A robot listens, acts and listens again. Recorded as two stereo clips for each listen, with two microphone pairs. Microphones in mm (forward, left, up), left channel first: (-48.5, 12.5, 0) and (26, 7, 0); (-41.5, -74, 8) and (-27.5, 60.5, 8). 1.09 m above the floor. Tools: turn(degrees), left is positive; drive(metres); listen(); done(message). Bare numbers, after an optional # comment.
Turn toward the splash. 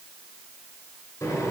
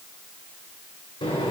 listen()
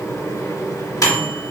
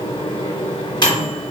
listen()
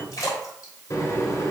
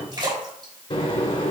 # The splash: 140° left.
turn(140)
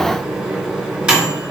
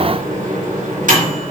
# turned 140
done("Facing where the splash came from. I can't hear it now.")